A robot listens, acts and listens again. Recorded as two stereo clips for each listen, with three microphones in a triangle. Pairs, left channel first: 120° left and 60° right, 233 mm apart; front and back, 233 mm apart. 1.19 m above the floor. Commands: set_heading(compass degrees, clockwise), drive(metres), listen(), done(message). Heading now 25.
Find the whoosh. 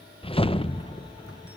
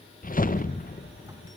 set_heading(335)
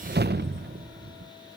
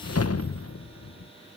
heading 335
set_heading(345)
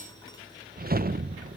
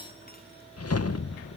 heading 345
done("Facing the whoosh, under 1 m away.")